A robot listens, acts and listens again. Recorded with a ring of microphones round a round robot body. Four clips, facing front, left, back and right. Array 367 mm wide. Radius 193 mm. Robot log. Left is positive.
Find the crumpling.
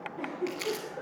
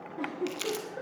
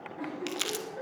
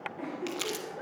note: The crumpling: straight behind.
cmd yaw +180
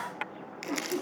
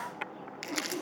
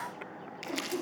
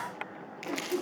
note: The crumpling is now 65° left.
cmd yaw +65
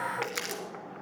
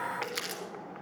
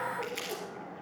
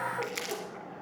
note: The crumpling is now 20° left.
cmd yaw +20
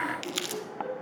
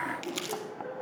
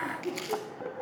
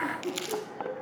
end: Found it: crumpling, straight ahead, 1 to 2 m away.